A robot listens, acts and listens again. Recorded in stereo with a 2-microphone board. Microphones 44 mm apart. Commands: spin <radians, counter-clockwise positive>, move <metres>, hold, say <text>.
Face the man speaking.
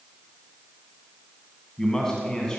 spin 0.52
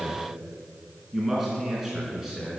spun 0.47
spin -0.17
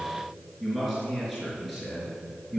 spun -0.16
say Found it: a man speaking, straight ahead, over 4 m away.